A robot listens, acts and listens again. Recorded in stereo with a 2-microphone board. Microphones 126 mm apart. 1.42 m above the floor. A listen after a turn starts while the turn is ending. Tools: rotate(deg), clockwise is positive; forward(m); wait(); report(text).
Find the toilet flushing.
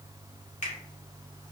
wait()
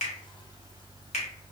wait()
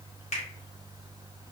report("I can't make out a toilet flushing, only a finger snap.")